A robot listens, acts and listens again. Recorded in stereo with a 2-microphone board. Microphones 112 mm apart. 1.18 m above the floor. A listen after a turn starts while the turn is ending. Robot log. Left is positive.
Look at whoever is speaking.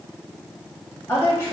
note: The woman speaking: about 20° left or 160° left.
cmd yaw +20
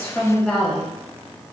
end: Facing the woman speaking.